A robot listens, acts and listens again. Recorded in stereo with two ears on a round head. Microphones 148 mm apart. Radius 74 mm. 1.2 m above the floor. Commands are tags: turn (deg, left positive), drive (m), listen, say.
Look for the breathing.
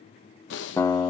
<turn deg="90"/>
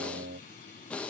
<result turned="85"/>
<say>Facing the breathing, under 1 m away.</say>